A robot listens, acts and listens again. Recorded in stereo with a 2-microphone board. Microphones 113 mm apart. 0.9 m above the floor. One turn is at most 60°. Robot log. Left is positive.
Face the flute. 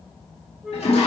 cmd yaw -30
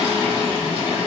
cmd idle
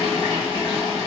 cmd idle
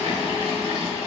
end: I heard a flute, but can't make it out now. It was about 25° left or 145° right.